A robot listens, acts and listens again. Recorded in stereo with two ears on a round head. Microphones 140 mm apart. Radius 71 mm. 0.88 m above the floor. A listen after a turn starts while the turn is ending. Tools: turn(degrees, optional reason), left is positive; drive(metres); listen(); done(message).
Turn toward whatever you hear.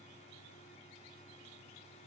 listen()
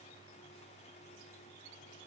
listen()
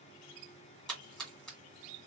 turn(degrees=30)
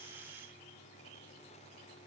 listen()
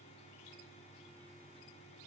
done("I heard a splash, but can't make it out now. It was about 25° right or 145° left.")